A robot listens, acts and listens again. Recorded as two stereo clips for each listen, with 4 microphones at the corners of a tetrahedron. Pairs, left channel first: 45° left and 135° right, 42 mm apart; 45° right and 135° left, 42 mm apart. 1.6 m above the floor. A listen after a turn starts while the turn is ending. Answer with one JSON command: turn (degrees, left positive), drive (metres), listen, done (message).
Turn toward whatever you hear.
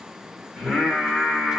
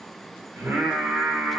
{"turn": 135}
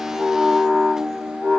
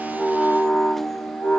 {"turn": -15}
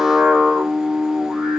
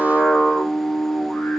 {"done": "Found it: singing, straight ahead."}